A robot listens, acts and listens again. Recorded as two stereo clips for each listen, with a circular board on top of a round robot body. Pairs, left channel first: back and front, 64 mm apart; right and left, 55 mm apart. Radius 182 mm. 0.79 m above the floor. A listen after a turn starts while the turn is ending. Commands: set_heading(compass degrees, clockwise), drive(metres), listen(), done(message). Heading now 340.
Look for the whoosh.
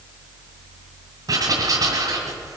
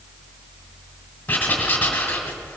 listen()
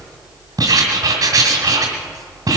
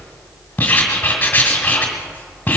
listen()
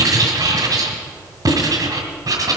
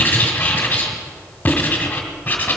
done("I can't make out a whoosh, only writing.")